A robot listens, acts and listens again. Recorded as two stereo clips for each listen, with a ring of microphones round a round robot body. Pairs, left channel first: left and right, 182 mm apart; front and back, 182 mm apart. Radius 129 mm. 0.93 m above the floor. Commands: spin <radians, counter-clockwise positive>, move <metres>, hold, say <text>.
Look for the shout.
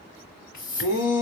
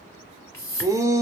spin 1.83
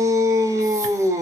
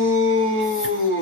spin -0.26
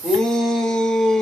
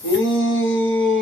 say Found it: a shout, straight ahead.